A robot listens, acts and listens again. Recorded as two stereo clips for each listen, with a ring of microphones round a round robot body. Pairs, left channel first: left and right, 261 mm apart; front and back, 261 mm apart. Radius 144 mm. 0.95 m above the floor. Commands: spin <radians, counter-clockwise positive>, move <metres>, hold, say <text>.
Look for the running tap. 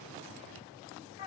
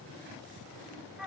hold
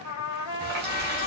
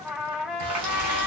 spin -2.62
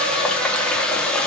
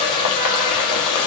say Facing the running tap, under 1 m away.